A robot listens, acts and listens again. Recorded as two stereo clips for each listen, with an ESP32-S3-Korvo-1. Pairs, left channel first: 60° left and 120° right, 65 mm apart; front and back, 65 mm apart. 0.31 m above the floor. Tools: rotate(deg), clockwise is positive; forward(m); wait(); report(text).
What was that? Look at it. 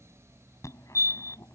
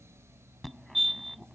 rotate(-90)
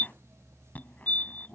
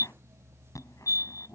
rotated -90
report("Facing the fire alarm.")